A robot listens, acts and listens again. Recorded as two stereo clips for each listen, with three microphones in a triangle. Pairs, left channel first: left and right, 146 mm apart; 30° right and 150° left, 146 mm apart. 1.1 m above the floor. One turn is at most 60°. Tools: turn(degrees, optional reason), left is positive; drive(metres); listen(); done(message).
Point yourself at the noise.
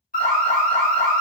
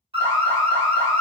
turn(degrees=60, reason="The alarm: 105° left.")
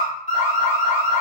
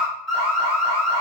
turn(degrees=55, reason="The alarm is now 55° left.")
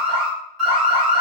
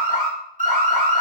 done("Facing the alarm.")